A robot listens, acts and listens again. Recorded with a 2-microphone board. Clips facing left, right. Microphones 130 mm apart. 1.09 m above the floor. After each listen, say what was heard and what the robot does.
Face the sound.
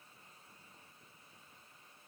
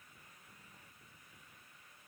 Keep listening.
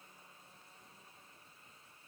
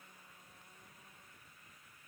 Keep listening.
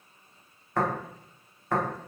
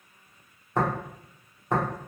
The tapping: about 20° right or 160° right. Turn 20° right.
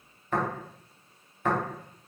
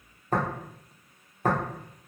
So it is at 135° right. Turn 135° right.
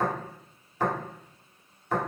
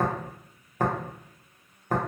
The tapping is now 50° right. Turn 50° right.
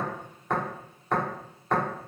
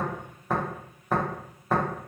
Found it: tapping, straight ahead.